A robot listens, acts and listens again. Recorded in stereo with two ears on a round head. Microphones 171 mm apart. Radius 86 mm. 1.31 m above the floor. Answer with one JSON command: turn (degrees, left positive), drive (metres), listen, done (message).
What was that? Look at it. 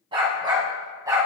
{"turn": -15}
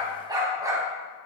{"turn": -15}
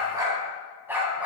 {"turn": -30}
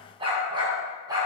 {"turn": -20}
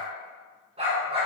{"turn": -150}
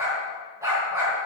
{"turn": -15}
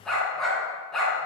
{"done": "Facing the dog barking, 2 to 4 m away."}